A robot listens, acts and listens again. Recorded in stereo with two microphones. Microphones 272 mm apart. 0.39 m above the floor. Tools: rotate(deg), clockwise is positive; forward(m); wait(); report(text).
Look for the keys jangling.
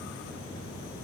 wait()
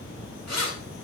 rotate(-90)
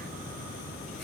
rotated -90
wait()
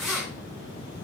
report("Found it: keys jangling, straight ahead.")